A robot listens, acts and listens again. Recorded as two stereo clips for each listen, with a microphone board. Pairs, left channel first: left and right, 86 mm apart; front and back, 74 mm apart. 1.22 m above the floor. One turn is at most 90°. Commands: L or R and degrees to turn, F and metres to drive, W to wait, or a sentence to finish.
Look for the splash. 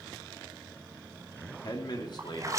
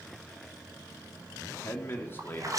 R90
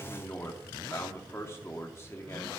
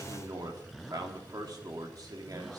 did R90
R55
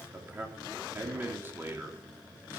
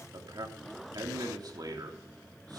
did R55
Facing where the splash came from. I can't hear it now.